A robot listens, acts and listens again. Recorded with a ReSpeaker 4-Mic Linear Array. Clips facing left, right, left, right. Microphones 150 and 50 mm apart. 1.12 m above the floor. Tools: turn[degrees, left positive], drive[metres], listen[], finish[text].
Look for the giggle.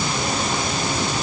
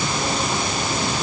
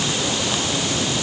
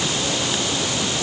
Action: listen[]
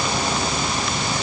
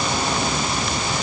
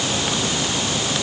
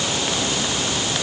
Action: listen[]
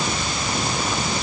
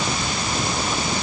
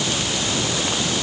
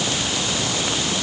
Action: finish[I can't make out a giggle to turn to.]